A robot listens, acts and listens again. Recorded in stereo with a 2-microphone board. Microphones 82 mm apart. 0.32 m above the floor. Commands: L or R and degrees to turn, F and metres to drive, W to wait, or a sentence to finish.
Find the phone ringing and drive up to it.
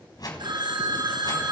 R60
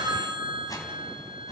R60
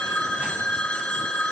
L15
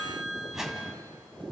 F1.0
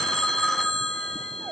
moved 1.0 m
F1.0
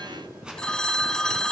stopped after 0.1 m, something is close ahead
L10
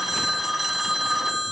I am next to the phone ringing.